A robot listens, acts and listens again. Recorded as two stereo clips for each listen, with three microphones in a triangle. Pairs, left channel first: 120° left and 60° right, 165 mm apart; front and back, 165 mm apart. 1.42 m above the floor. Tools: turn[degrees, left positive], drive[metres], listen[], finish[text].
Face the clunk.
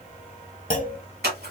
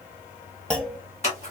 Thought: The clunk: 85° left.
Action: turn[85]
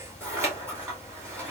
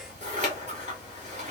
Action: finish[Facing where the clunk came from. I can't hear it now.]